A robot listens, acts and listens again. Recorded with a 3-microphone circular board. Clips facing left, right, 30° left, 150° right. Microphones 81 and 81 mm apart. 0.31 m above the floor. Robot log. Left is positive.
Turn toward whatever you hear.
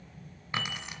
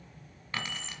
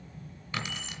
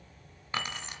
note: The keys jangling: 170° left.
cmd yaw +170
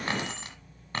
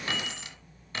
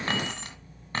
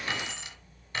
note: The keys jangling is now 60° left.
cmd yaw +60
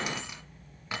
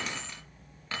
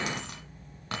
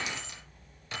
note: The keys jangling is now 20° left.
cmd yaw +20
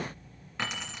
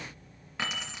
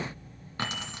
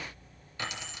end: Found it: keys jangling, straight ahead.